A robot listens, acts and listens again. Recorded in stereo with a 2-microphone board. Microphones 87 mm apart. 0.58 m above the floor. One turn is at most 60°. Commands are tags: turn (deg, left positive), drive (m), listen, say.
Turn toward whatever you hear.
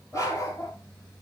<turn deg="35"/>
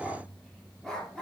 <say>Found it: a dog barking, straight ahead.</say>